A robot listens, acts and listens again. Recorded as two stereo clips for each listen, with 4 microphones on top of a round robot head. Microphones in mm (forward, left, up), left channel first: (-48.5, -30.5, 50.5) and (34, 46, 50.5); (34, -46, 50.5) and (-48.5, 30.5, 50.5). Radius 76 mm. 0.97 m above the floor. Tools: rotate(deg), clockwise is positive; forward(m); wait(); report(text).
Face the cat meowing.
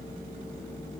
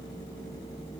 wait()
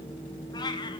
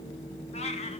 rotate(80)
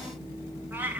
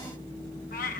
rotate(35)
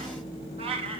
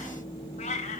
report("Facing the cat meowing, 2 to 4 m away.")